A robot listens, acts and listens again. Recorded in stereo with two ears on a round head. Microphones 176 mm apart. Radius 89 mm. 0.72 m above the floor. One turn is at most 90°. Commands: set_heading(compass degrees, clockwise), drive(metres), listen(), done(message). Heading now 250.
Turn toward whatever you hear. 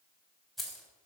set_heading(220)
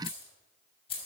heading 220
set_heading(130)
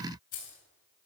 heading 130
set_heading(90)
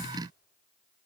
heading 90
listen()
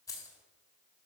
set_heading(75)
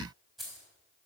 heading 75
done("Found it: keys jangling, straight ahead.")